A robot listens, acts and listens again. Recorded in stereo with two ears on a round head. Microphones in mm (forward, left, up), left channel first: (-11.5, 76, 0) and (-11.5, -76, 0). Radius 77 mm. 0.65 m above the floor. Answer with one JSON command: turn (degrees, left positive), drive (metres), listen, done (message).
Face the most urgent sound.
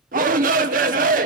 {"turn": -50}
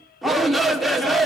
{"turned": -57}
{"done": "Found it: a shout, straight ahead, 1 to 2 m away."}